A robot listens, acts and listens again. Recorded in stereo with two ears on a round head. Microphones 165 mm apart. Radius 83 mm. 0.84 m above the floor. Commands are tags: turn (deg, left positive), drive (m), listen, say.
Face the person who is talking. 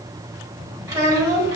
<turn deg="-30"/>
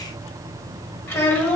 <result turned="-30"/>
<turn deg="15"/>
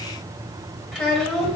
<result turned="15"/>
<say>Facing the child speaking.</say>